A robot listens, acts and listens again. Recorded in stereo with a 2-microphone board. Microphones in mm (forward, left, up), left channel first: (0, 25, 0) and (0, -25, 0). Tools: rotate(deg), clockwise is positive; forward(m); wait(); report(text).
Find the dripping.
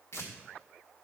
wait()
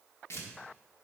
wait()
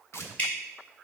rotate(-25)
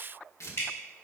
rotate(-125)
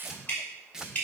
rotate(-30)
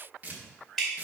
report("Facing the dripping.")